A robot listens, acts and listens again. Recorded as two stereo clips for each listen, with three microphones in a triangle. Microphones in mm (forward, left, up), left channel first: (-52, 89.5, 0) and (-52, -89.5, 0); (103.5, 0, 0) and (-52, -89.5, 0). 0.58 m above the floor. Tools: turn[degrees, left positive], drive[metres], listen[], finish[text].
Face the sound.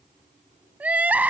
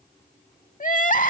Thought: The crying: 10° right.
Action: turn[-10]
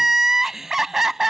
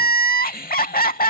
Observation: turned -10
Action: finish[Facing the crying.]